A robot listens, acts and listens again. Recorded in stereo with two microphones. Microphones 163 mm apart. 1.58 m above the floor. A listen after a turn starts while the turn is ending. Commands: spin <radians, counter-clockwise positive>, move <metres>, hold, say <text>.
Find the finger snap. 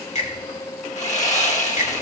spin 0.79
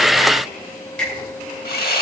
say Facing the finger snap.